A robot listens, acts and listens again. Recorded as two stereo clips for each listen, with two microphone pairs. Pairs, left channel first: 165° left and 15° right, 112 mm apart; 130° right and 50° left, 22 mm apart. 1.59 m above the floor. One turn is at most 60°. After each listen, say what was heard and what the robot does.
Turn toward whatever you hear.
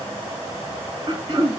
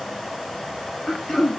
The throat clearing: 55° right. Turn 55° right.
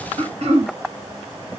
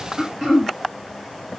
Facing the throat clearing, 1 to 2 m away.